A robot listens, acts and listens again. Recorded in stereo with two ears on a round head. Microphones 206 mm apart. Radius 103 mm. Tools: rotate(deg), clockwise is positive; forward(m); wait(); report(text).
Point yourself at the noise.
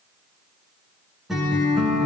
rotate(-30)
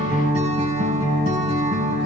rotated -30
rotate(30)
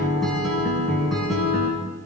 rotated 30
report("Facing the guitar, over 4 m away.")